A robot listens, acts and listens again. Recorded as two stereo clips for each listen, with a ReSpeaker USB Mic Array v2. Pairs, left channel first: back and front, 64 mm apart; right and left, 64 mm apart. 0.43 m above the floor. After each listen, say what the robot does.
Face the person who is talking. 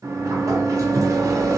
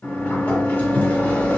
Keep listening.
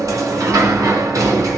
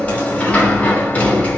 Keep listening.
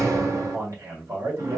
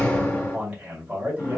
Turn 25° left.
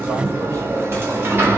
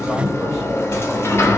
Keep listening.
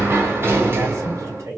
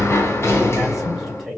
Facing the man speaking, 2 to 4 m away.